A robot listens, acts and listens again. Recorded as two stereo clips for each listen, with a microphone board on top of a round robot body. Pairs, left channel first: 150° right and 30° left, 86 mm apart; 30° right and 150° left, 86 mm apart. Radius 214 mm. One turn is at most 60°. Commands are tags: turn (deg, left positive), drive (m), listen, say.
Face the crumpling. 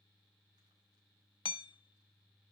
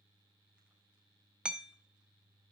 <listen/>
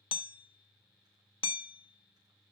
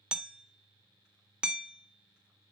<listen/>
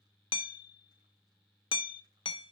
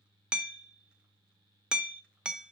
<say>I can't make out crumpling to turn to.</say>